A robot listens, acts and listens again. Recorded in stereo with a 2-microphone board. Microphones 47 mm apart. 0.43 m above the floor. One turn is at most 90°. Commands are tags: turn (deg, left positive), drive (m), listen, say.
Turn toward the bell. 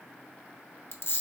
<listen/>
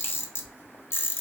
<listen/>
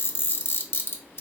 <say>I can't make out a bell to turn to.</say>